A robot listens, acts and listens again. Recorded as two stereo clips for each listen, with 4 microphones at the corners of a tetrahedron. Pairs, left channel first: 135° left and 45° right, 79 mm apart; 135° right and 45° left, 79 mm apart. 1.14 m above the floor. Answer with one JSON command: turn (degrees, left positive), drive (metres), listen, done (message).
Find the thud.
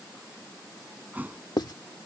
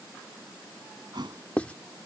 {"turn": 25}
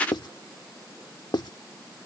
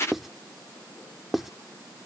{"done": "Facing where the thud came from. I can't hear it now."}